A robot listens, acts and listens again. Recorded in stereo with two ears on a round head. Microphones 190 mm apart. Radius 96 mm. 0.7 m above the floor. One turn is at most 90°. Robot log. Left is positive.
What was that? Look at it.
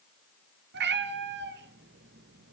note: The cat meowing: about 55° right or 125° right.
cmd yaw -55
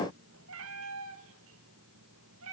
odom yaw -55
note: So it is at 70° right.
cmd yaw -70
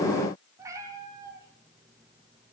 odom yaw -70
note: The cat meowing is now 15° right.
cmd yaw -15
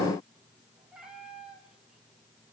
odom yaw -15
end: Facing the cat meowing.